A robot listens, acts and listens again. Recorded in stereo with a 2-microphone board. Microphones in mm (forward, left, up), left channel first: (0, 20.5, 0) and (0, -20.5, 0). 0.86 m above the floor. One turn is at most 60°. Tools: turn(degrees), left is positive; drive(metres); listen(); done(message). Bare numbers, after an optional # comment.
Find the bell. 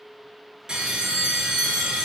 turn(-30)
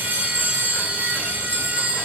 # So it is at 140° right.
turn(-60)
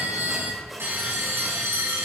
# The bell is now 80° right.
turn(-60)
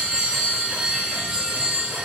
# The bell is now 20° right.
turn(-20)
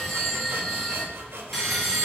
done("Found it: a bell, straight ahead, over 4 m away.")